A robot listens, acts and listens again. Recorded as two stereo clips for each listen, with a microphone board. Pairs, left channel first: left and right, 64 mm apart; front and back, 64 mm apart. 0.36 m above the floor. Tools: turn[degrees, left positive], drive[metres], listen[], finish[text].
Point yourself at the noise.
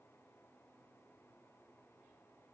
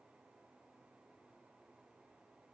Action: listen[]
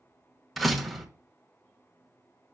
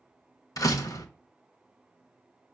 Action: finish[Found it: a door slam, straight ahead.]